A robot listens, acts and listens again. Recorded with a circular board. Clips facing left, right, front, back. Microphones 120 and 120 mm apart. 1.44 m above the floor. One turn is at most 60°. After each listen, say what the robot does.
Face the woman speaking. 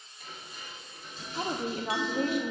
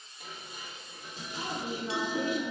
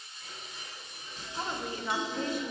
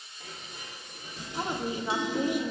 Turn 60° left.
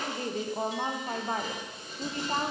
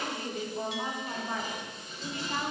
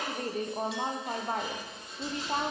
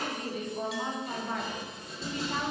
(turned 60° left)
Turn 45° left.
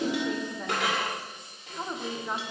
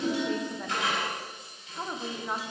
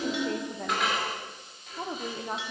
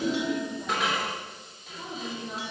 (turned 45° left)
Facing the woman speaking, under 1 m away.